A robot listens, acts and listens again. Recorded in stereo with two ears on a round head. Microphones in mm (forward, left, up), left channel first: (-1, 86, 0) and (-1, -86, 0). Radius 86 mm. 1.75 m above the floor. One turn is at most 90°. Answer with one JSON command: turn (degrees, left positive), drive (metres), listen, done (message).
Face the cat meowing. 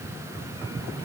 {"listen": true}
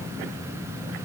{"listen": true}
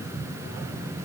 {"done": "I can't make out a cat meowing."}